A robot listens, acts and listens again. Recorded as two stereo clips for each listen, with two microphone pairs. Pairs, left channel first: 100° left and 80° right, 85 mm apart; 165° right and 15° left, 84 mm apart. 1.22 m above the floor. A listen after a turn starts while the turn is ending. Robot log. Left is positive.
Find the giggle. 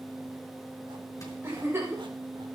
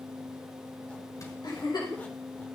note: The giggle: 140° right.
cmd yaw -140
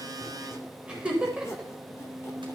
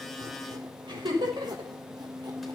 end: Found it: a giggle, straight ahead.